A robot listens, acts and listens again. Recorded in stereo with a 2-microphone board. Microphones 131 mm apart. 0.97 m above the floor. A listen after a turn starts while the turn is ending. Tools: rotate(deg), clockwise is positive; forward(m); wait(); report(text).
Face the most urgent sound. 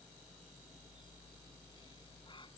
wait()
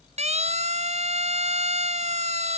rotate(55)
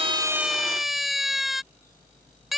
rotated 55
report("Facing the siren.")